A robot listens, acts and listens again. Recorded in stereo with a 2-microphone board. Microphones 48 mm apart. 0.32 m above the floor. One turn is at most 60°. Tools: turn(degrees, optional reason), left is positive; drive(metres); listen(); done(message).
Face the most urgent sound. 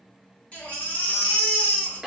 turn(degrees=25, reason="The baby crying: about 25° left or 155° left.")
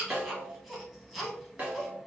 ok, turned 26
done("Facing the baby crying, under 1 m away.")